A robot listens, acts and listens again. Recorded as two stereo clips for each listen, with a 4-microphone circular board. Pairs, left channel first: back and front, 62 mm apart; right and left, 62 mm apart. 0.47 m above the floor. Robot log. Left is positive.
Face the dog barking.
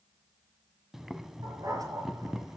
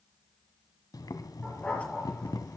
note: The dog barking: 20° right.
cmd yaw -20
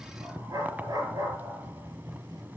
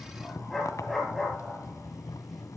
end: Facing the dog barking.